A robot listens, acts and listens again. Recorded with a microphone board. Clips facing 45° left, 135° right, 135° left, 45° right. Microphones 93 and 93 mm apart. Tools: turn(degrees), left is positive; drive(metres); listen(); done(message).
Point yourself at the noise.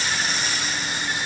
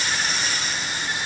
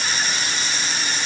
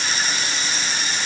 listen()
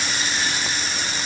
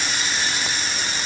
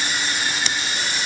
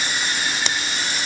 listen()
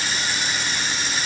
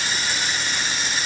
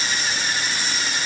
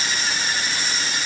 done("I can't make out anything.")